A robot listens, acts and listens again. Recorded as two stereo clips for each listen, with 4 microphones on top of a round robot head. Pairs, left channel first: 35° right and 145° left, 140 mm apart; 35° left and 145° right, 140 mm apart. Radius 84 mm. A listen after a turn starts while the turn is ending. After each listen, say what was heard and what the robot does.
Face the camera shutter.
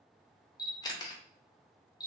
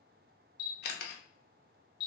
The camera shutter: 25° left. Turn 25° left.
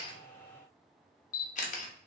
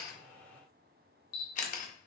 Found it: a camera shutter, straight ahead, under 1 m away.